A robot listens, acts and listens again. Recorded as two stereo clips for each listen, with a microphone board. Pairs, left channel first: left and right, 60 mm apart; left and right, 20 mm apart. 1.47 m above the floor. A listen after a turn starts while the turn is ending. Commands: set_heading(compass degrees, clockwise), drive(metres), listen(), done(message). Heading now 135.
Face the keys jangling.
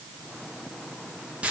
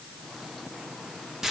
listen()
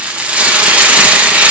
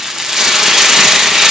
listen()
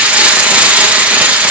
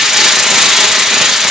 done("I can't make out keys jangling to turn to.")